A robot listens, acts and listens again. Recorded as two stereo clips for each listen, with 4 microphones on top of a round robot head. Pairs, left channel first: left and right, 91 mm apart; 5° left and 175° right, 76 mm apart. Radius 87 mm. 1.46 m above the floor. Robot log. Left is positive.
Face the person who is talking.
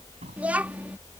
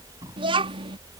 note: The child speaking: 170° right.
cmd yaw -170
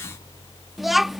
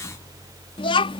end: Found it: a child speaking, straight ahead.